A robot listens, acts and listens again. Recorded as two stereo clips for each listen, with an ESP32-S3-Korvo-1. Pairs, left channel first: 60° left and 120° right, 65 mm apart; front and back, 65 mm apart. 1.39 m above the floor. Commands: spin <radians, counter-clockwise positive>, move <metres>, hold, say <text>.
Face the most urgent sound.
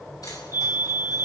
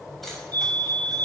spin -3.05
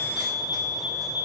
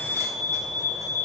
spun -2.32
spin -0.70
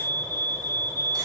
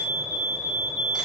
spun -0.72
say Facing the fire alarm.